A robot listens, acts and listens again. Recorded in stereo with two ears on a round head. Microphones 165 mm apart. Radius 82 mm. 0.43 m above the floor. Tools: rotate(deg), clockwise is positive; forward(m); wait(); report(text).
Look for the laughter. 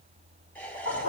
rotate(-30)
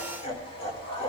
rotate(-140)
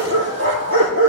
wait()
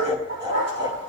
rotate(25)
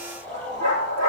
rotate(-10)
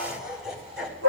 report("Facing the laughter, 2 to 4 m away.")